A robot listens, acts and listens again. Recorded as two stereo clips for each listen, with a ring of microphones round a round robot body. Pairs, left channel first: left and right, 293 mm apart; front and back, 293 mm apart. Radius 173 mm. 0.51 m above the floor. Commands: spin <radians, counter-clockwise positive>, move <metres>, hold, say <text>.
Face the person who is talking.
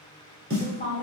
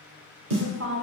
spin 2.71
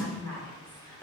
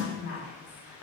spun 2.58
spin 0.17
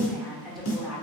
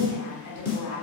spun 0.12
say Facing the woman speaking.